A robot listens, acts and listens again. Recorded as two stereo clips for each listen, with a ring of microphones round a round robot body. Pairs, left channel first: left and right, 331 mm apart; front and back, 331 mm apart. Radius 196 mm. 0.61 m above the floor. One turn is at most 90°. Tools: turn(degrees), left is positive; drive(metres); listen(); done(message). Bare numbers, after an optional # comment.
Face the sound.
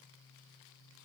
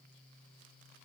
listen()
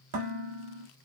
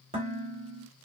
# The dishes clattering: 105° right.
turn(-90)
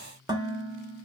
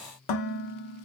# The dishes clattering is now 10° right.
turn(-10)
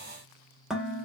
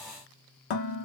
done("Found it: dishes clattering, straight ahead.")